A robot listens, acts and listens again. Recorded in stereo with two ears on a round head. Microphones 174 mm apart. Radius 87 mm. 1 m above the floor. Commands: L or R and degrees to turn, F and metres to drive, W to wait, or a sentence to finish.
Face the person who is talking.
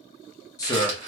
L20
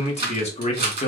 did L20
L140
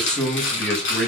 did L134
Facing the man speaking, 1 to 2 m away.